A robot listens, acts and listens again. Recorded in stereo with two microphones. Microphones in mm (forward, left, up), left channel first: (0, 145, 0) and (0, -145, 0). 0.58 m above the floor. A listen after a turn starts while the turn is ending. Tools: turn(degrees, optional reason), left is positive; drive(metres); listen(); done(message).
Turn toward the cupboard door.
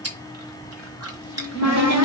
turn(degrees=-70, reason="The cupboard door: about 70° right or 110° right.")
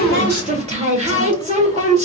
turn(degrees=-25, reason="So it is at 25° right.")
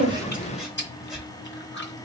listen()
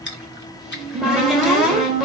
done("Facing the cupboard door, 1 to 2 m away.")